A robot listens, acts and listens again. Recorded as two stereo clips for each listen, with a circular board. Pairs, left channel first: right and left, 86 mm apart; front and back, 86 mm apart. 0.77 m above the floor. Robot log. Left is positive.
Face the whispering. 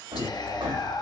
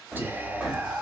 note: The whispering: 115° right.
cmd yaw -115
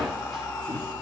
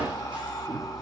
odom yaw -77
note: Nothing new. It was at 40° right.
cmd yaw -40
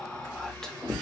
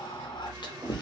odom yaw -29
note: The whispering is now 10° right.
cmd yaw -10
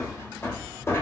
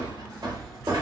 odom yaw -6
cmd idle
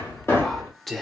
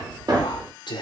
end: Found it: whispering, straight ahead, under 1 m away.